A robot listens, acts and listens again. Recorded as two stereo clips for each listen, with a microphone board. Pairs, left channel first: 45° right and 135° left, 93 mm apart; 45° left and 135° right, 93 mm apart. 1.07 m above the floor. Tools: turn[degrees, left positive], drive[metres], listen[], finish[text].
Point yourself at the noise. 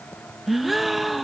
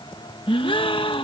Thought: The gasp: 45° left.
Action: turn[45]
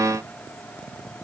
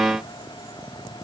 Action: finish[I heard a gasp from this way, but can't make it out now.]